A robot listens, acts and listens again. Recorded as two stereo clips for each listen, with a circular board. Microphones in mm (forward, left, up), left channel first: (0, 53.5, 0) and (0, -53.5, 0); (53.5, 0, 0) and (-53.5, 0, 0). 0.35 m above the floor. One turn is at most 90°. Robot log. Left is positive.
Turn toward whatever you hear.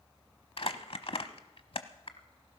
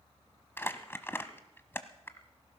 note: The crumpling: 65° left.
cmd yaw +65
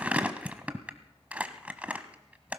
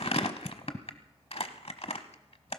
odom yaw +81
note: The crumpling is now 15° right.
cmd yaw -15
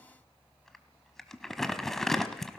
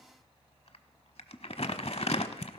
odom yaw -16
end: Found it: crumpling, straight ahead.